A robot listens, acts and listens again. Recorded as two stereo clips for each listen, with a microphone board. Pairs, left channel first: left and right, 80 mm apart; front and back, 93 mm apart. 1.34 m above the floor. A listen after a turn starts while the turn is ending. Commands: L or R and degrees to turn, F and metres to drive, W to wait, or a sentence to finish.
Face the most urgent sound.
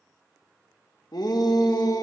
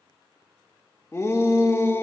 L60
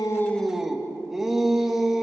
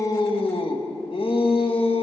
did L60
Found it: a shout, straight ahead.